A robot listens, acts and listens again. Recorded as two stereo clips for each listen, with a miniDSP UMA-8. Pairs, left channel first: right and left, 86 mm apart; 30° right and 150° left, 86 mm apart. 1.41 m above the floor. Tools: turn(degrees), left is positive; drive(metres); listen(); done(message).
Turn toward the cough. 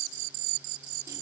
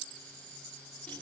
listen()
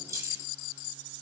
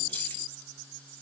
listen()
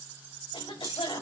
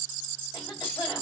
turn(degrees=-80)
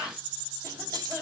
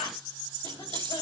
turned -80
turn(degrees=10)
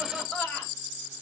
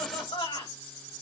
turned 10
done("Found it: a cough, straight ahead.")